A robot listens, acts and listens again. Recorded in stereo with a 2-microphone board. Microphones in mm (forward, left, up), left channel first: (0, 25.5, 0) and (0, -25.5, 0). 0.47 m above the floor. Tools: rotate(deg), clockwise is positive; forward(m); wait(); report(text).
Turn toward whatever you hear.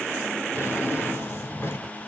rotate(-45)
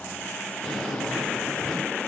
report("Facing the drawer.")